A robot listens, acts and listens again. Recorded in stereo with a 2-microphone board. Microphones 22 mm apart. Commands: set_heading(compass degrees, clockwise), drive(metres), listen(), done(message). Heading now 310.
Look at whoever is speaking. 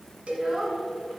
set_heading(350)
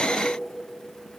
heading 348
listen()
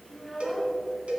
done("Facing the child speaking, 2 to 4 m away.")